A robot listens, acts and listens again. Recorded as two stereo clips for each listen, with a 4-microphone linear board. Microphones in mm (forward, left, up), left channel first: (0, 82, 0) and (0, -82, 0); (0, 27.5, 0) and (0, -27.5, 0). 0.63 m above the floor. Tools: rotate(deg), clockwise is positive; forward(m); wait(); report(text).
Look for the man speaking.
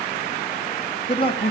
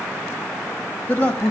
rotate(-35)
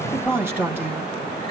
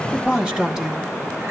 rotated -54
rotate(15)
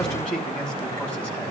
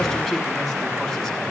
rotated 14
wait()
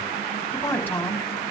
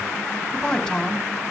rotate(-10)
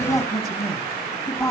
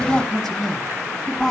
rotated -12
report("Facing the man speaking, over 4 m away.")